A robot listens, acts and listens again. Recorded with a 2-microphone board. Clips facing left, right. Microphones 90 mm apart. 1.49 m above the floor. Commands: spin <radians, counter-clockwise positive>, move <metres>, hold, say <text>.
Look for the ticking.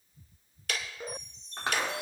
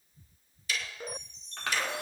spin 1.13
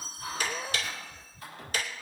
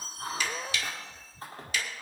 spin 0.79
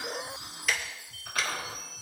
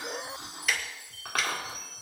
say Facing the ticking.